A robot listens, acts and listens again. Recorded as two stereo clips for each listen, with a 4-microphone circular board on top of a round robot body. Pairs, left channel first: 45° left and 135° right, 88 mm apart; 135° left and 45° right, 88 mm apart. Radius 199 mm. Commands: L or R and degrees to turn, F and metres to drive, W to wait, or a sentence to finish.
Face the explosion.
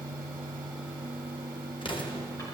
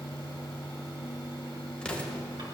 L55
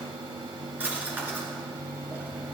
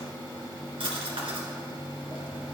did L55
Facing where the explosion came from. I can't hear it now.